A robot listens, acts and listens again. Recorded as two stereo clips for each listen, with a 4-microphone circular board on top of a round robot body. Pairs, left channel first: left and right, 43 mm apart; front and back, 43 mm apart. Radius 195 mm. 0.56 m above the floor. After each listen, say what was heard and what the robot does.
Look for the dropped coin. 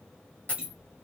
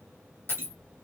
The dropped coin: 35° left. Turn 35° left.
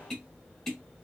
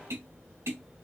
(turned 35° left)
Facing where the dropped coin came from. I can't hear it now.